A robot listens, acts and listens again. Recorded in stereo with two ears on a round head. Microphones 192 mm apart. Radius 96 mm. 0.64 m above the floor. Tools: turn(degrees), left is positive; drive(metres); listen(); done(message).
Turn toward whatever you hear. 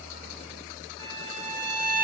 turn(degrees=-65)
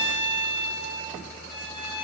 turn(degrees=-30)
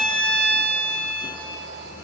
done("Found it: a violin, straight ahead.")